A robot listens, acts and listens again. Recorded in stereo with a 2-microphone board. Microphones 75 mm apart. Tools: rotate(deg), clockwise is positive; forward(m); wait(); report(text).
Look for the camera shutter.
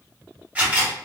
rotate(20)
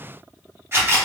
rotate(140)
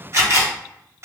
rotate(50)
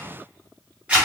rotate(20)
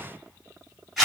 rotate(10)
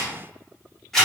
report("Found it: a camera shutter, straight ahead, 1 to 2 m away.")